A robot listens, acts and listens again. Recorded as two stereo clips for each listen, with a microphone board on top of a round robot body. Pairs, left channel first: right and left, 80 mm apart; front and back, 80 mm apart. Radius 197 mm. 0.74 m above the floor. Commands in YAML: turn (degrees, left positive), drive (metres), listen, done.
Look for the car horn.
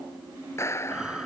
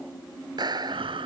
listen: true
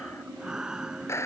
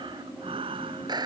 listen: true
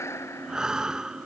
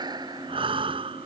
done: "I can't make out a car horn, only breathing and a clap."